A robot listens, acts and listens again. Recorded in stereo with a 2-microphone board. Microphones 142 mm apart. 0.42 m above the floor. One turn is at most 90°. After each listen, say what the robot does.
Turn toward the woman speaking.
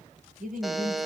Turn 75° right.
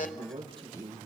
Turn 30° right.
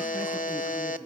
Facing the woman speaking, over 4 m away.